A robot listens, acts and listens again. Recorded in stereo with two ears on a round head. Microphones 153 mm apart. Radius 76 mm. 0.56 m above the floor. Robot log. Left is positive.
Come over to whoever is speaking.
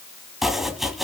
cmd idle
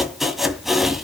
cmd idle
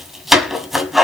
end: I can't make out anyone speaking to turn to.